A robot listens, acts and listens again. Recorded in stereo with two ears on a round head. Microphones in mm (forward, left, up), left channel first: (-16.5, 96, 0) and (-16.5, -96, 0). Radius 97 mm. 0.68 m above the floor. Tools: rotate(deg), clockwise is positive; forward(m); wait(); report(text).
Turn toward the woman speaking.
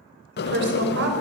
rotate(55)
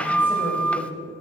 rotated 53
wait()
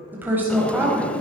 rotate(10)
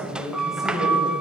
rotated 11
report("Found it: a woman speaking, straight ahead, over 4 m away.")